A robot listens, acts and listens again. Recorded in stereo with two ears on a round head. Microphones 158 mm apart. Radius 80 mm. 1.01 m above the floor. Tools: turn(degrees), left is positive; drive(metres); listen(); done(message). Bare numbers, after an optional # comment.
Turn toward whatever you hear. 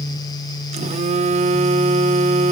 # The phone buzzing: about 40° right or 140° right.
turn(-40)
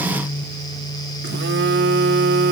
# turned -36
# So it is at 105° right.
turn(-105)
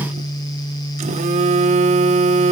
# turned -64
# The phone buzzing is now 40° right.
turn(-40)
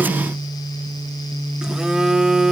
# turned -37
done("Facing the phone buzzing.")